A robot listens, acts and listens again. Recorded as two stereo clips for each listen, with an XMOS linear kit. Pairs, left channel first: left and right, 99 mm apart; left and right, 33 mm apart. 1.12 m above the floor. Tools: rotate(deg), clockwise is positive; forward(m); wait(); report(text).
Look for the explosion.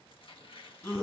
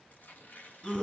wait()
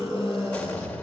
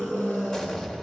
rotate(-20)
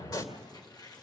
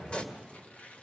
rotate(-140)
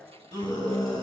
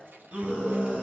report("Facing where the explosion came from. I can't hear it now.")